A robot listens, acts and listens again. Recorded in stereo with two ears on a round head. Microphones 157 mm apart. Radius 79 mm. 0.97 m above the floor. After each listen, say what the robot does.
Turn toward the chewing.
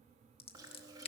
Turn 20° right.
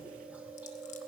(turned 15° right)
Turn 10° right.
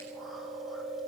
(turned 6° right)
Found it: chewing, straight ahead, 2 to 4 m away.